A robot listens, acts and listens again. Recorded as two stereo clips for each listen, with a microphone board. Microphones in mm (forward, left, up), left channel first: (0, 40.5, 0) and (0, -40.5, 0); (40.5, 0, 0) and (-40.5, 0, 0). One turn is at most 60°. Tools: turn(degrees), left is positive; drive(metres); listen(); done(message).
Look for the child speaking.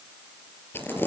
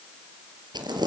listen()
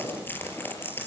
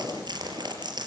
listen()
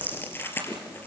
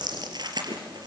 done("I can't make out a child speaking, only crumpling.")